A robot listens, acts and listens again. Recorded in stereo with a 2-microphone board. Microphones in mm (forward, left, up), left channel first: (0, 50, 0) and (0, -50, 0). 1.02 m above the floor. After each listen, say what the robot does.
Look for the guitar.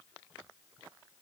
Keep listening.
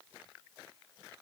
Keep listening.
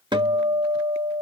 Turn 55° right.
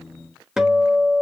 Facing the guitar.